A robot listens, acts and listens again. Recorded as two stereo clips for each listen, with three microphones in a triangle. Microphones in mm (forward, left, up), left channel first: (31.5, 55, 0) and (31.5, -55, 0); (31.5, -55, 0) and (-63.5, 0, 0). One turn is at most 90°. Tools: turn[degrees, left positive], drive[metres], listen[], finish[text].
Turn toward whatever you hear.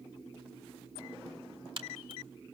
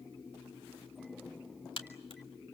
Thought: The crack: 60° right.
Action: turn[-60]
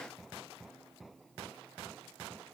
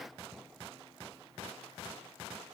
Action: finish[I heard a crack from this way, but can't make it out now.]